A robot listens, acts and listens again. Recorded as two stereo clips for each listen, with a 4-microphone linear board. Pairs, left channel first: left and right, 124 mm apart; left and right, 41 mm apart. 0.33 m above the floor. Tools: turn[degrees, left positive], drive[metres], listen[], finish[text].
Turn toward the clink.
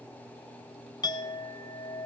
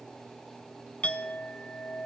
Thought: The clink: about 35° left or 145° left.
Action: turn[35]
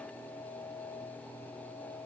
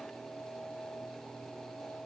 Thought: So it is at 110° left.
Action: turn[110]
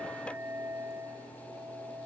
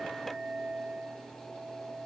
Action: finish[Found it: a clink, straight ahead.]